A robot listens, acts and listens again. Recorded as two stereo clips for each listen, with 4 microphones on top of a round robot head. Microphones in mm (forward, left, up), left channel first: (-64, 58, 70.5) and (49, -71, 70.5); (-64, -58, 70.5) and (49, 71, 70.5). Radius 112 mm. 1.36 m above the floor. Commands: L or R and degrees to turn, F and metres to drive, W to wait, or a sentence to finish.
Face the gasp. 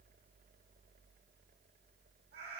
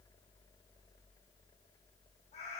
W
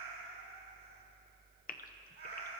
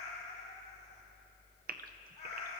L85
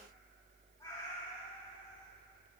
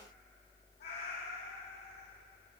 Facing where the gasp came from. I can't hear it now.